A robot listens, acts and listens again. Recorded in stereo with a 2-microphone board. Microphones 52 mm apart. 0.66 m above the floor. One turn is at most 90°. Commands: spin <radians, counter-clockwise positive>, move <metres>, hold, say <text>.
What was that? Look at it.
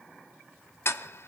spin 1.05
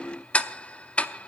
spin 0.52
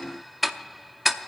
say Found it: ticking, straight ahead.